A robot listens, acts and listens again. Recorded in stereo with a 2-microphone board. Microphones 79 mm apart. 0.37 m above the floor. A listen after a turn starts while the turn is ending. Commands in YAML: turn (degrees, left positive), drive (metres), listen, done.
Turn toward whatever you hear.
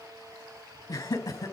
turn: 40
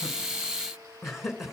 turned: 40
done: "Facing the laughter, 2 to 4 m away."